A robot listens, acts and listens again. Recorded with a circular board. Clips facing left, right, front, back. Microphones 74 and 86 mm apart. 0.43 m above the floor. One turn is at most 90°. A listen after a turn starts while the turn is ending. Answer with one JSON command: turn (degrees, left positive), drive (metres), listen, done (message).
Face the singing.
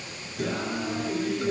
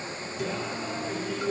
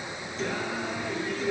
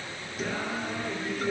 {"turn": 90}
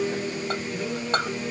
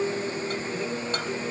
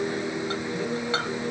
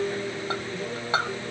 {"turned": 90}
{"turn": 10}
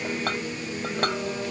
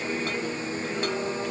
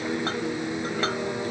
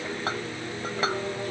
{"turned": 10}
{"done": "Facing the singing, 2 to 4 m away."}